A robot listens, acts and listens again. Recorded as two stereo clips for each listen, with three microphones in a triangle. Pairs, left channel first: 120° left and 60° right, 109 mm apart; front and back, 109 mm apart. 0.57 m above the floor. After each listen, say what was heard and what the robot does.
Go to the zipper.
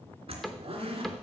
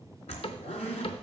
The zipper: 25° right. Turn 25° right.
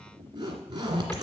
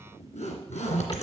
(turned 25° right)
The zipper is now 10° right. Turn 10° right.
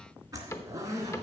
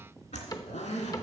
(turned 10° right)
Drive 1.0 m forward.
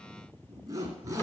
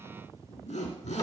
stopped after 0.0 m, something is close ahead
Something is in my way. I am facing the zipper but have not reached it.